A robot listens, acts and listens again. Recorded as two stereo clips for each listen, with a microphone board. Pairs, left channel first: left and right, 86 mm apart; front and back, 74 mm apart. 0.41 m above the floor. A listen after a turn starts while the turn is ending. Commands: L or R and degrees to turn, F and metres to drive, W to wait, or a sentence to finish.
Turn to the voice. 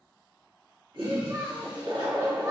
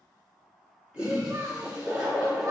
R140
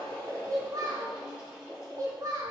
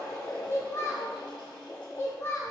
R50
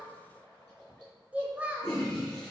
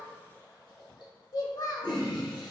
R20
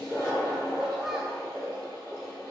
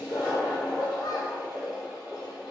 W
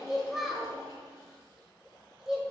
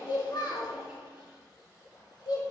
Found it: a child speaking, straight ahead, under 1 m away.